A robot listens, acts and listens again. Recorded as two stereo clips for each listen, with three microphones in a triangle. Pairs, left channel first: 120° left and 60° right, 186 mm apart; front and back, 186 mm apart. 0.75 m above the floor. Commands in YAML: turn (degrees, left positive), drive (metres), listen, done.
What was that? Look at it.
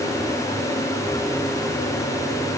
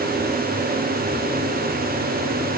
listen: true
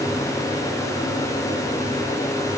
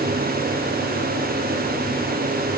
listen: true
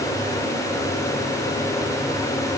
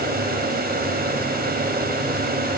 done: "I can't make out anything to turn to."